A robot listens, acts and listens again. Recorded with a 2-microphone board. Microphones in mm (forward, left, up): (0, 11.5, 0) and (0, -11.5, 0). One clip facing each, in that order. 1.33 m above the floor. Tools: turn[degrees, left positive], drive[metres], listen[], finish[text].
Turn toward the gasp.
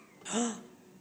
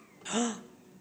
Thought: The gasp: about 20° right or 160° right.
Action: turn[-20]
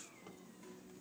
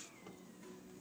Action: listen[]
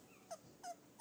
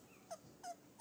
Action: finish[I heard a gasp, but can't make it out now. It was about straight ahead or 140° right.]